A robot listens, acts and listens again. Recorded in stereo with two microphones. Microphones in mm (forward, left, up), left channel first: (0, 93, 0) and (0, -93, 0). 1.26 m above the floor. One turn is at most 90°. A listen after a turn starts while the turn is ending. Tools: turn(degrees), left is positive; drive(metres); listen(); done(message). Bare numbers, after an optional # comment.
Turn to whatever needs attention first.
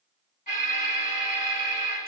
# The alarm: about 45° left or 135° left.
turn(45)
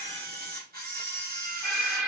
done("Facing the alarm.")